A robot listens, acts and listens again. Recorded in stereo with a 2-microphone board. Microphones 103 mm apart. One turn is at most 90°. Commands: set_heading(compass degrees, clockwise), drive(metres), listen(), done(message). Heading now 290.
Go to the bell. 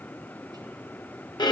listen()
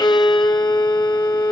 listen()
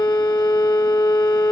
done("I can't make out a bell, only a violin.")